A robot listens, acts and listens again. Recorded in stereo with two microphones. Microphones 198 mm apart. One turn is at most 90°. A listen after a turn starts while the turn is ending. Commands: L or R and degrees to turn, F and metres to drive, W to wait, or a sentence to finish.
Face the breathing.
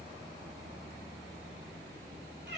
W
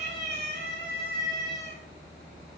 W
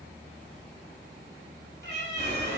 L35
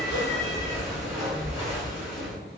Facing the breathing.